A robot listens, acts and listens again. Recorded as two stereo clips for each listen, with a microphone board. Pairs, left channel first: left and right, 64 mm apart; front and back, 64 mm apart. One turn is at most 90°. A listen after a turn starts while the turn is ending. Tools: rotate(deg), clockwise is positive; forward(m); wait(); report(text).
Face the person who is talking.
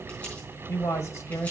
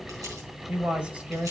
rotate(-90)
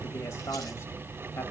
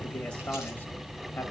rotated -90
rotate(-60)
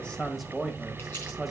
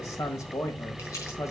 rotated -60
report("Facing the man speaking.")